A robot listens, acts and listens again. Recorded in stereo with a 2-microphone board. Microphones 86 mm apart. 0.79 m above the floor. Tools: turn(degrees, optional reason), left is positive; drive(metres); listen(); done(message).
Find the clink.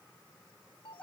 listen()
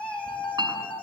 turn(degrees=-55, reason="The clink: about 55° right or 125° right.")
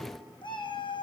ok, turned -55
listen()
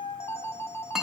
done("Facing the clink, over 4 m away.")